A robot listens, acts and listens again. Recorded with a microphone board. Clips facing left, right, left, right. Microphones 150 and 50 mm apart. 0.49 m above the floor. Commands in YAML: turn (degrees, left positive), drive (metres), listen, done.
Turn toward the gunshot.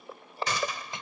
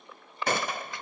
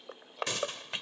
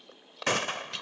turn: -55
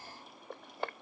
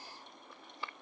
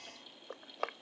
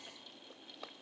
listen: true
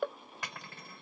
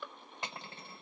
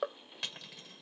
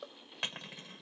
done: "I heard a gunshot, but can't make it out now. It was about straight ahead or 70° right."